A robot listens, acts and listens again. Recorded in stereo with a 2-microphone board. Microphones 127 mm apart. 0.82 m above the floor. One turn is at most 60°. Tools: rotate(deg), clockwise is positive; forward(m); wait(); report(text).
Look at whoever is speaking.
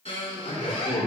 rotate(-60)
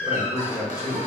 rotate(-30)
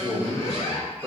report("Facing the man speaking, 2 to 4 m away.")